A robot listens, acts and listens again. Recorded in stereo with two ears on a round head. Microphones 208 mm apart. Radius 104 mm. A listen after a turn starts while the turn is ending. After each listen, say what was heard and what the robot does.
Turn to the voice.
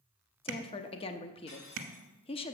The woman speaking: about 25° left or 155° left. Turn 25° left.
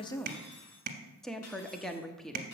Facing the woman speaking, under 1 m away.